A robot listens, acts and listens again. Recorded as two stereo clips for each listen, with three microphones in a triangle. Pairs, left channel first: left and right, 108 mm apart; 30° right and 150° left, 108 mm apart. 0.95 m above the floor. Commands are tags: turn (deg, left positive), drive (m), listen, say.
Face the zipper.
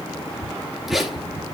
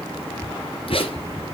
<say>Found it: a zipper, straight ahead, 2 to 4 m away.</say>